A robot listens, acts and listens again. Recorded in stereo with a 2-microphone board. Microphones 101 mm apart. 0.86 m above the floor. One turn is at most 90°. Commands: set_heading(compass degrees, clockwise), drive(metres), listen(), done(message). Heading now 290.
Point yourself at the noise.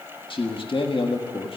set_heading(230)
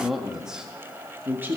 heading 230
set_heading(250)
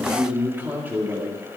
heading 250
set_heading(270)
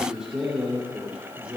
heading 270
set_heading(280)
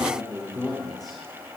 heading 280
done("Facing the man speaking, 2 to 4 m away.")